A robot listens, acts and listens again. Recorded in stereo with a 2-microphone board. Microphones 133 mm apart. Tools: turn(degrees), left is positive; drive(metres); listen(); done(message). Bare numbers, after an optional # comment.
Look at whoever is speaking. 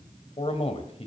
# The man speaking: about 50° left or 130° left.
turn(50)
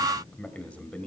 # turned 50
# So it is at 10° left.
turn(10)
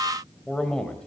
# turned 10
done("Found it: a man speaking, straight ahead, 1 to 2 m away.")